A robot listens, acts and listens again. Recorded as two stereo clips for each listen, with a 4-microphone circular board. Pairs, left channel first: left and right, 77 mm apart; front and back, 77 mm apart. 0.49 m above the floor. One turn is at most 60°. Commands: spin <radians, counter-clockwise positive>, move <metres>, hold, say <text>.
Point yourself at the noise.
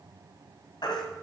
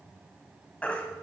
spin 1.05
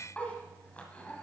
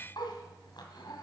spin 0.26
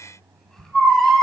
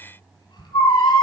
say Found it: a baby crying, straight ahead, 1 to 2 m away.